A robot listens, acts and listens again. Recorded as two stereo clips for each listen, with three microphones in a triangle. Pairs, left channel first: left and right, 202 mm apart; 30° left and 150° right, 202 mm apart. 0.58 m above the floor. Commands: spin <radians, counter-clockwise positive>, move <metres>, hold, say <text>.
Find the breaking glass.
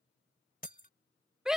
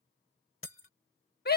spin 0.79
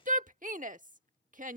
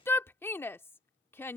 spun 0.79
say I heard breaking glass from this way, but can't make it out now.